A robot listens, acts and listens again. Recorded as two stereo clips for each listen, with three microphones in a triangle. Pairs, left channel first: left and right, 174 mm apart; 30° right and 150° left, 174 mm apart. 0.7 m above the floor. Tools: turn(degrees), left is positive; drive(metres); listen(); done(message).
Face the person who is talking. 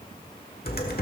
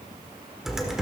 listen()
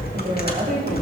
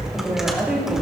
turn(degrees=-125)
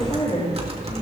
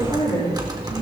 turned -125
turn(degrees=30)
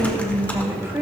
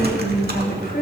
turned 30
turn(degrees=-15)
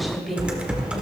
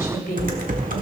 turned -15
done("Found it: a woman speaking, straight ahead.")